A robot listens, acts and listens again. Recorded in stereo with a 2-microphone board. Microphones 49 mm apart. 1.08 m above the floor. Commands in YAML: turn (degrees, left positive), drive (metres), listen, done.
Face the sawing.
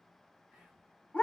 listen: true
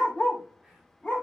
listen: true
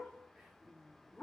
done: "I can't make out sawing to turn to."